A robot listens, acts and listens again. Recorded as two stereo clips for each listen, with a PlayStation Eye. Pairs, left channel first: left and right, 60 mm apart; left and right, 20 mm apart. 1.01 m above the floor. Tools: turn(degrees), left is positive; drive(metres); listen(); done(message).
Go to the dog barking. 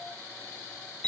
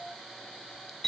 listen()
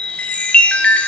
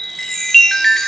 listen()
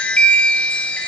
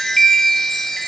done("I can't make out a dog barking, only a chime.")